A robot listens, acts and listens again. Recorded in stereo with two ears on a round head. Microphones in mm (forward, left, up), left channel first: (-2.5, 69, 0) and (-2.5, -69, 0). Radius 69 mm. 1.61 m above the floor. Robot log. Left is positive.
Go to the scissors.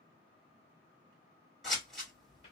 cmd yaw +30
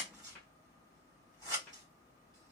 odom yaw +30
note: So it is at 30° right.
cmd yaw -30
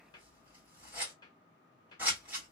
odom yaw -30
note: The scissors is now 15° right.
cmd yaw -15
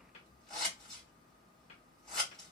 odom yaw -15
cmd fwd 1.0
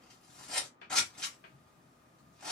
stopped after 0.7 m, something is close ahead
end: I am next to the scissors.